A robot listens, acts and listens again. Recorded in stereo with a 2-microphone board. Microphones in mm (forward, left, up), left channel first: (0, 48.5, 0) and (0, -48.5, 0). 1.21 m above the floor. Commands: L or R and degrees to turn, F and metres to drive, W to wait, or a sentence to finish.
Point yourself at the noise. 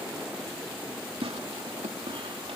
R90
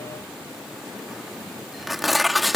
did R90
Facing the tearing paper.